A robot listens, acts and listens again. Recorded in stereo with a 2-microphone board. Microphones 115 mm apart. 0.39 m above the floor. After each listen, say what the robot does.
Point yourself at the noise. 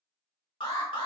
Turn 50° left.
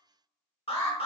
Turn 70° left.
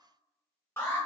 Turn 25° left.
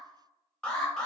Turn 10° left.
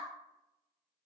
Keep listening.
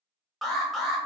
Found it: an alarm, straight ahead.